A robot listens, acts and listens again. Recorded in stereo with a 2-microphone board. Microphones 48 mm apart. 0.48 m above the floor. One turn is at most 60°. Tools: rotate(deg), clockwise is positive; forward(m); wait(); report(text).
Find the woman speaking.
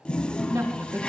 rotate(60)
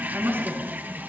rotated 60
rotate(50)
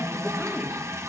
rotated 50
wait()
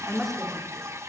report("Facing the woman speaking.")